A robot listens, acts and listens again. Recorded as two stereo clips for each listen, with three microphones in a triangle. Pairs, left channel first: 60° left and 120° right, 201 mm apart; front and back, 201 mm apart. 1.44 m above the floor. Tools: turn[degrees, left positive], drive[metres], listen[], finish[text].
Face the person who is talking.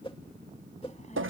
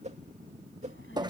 Action: finish[Found it: a child speaking, straight ahead.]